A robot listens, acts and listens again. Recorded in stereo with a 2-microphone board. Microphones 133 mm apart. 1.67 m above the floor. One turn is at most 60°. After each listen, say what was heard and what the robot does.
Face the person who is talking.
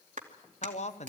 The man speaking: about 55° left or 125° left. Turn 55° left.
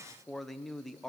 Found it: a man speaking, straight ahead, 1 to 2 m away.